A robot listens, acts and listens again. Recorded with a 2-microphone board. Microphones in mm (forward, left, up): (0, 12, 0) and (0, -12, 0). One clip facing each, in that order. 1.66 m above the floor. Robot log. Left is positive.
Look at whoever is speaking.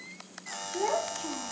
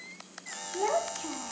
cmd yaw -30
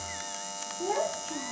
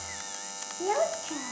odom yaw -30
note: So it is at 140° right.
cmd yaw -140
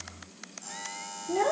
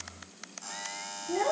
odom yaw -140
note: The child speaking is now 10° left.
cmd yaw +10
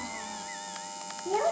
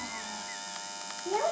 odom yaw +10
end: Found it: a child speaking, straight ahead, 2 to 4 m away.